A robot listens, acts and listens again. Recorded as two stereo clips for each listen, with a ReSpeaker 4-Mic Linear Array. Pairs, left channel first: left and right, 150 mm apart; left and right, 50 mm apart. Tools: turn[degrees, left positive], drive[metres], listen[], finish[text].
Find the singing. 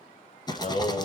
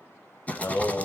Thought: The singing: about 50° left or 130° left.
Action: turn[50]
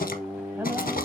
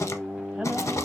Thought: So it is at 15° right.
Action: turn[-15]
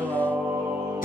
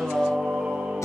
Thought: The singing is now 15° right.
Action: turn[-15]
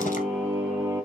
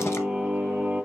Thought: The singing is now 10° right.
Action: turn[-10]
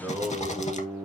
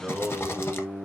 Action: finish[Facing the singing.]